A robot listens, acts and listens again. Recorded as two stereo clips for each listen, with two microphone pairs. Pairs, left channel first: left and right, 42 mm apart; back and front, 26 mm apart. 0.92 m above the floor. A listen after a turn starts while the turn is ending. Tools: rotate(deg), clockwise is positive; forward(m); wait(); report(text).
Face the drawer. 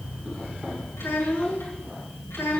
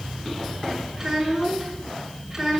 wait()
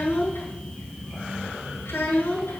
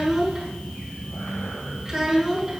wait()
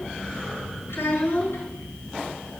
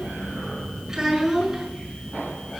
report("I can't make out a drawer to turn to.")